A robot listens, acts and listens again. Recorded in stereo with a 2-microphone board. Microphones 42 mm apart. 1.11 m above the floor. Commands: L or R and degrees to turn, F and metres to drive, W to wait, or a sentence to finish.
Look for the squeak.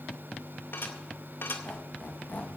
L40
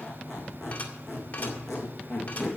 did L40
Found it: a squeak, straight ahead, 2 to 4 m away.